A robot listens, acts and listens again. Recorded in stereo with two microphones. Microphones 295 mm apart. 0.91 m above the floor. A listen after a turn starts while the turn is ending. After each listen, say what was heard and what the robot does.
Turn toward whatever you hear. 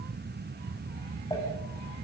Keep listening.
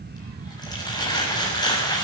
Turn 30° left.
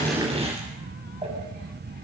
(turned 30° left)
So it is at 20° right. Turn 20° right.
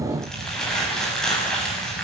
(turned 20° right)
Found it: crumpling, straight ahead.